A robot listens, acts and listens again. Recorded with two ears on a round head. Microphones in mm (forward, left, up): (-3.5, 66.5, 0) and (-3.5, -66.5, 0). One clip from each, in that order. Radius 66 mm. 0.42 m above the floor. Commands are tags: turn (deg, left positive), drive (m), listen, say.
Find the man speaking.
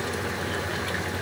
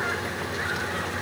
<listen/>
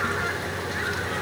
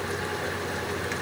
<listen/>
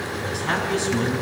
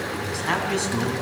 <turn deg="-20"/>
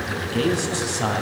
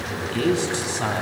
<turn deg="30"/>
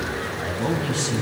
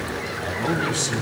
<turn deg="-30"/>
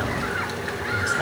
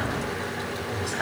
<say>Found it: a man speaking, straight ahead.</say>